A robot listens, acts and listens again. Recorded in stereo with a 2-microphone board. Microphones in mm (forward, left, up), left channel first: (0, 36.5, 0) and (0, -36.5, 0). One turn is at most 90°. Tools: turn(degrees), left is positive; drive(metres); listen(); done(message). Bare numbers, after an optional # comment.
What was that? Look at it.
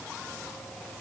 listen()
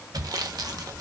# The sawing: about 65° right or 115° right.
turn(-65)
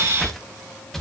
done("Found it: sawing, straight ahead, under 1 m away.")